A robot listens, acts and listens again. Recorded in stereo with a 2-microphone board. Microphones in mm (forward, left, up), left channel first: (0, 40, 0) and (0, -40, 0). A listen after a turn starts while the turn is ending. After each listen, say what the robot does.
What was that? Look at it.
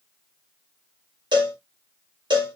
Turn 90° right.
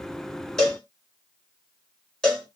Turn 10° left.
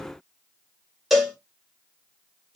Facing the cowbell, 1 to 2 m away.